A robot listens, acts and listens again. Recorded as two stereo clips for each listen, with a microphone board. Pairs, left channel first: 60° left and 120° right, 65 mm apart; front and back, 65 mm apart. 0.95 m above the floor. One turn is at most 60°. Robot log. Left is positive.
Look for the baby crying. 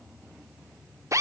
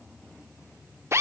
cmd idle
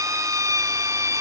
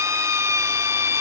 cmd idle
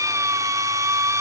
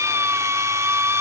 end: I can't make out a baby crying, only a drill.